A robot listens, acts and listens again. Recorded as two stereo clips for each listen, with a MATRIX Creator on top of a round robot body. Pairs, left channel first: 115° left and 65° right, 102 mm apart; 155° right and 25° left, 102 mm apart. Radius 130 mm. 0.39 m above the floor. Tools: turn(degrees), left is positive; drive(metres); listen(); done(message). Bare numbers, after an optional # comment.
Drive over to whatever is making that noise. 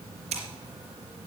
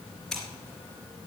# The scissors: 70° right.
turn(-70)
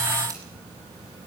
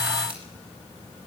listen()
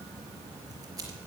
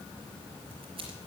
# The scissors is now 10° right.
turn(-10)
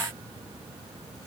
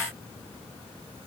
listen()
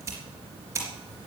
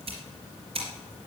drive(1.0)
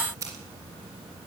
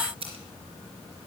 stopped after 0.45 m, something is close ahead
done("Something is in my way. I am facing the scissors but have not reached it.")